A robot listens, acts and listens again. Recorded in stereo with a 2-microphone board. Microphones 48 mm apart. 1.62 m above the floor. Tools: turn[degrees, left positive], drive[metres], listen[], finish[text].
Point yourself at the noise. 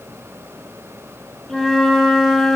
Action: turn[30]
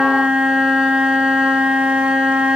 Thought: So it is at 20° right.
Action: turn[-20]
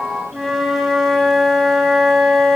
Action: finish[Facing the flute.]